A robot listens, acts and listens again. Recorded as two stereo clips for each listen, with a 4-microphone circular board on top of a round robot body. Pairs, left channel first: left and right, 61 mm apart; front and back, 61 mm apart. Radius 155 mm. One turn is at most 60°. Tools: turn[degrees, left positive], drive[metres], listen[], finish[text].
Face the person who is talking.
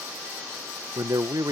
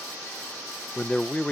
Thought: The man speaking: 70° right.
Action: turn[-60]
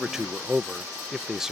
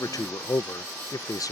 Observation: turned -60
Thought: The man speaking is now 10° right.
Action: turn[-10]
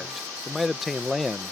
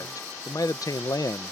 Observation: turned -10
Action: finish[Found it: a man speaking, straight ahead.]